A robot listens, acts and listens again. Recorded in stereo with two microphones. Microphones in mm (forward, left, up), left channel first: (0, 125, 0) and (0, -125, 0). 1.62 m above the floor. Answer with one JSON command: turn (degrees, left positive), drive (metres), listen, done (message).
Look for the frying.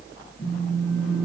{"listen": true}
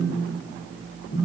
{"listen": true}
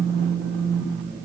{"done": "I can't make out frying to turn to."}